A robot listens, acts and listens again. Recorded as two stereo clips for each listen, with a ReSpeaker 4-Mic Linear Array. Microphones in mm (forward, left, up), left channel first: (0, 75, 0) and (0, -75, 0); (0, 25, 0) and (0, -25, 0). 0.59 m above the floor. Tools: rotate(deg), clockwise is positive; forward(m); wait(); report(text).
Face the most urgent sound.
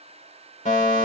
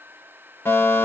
rotate(-55)
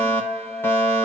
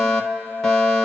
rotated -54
rotate(-15)
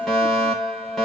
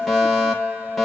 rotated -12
report("Found it: a fire alarm, straight ahead, 2 to 4 m away.")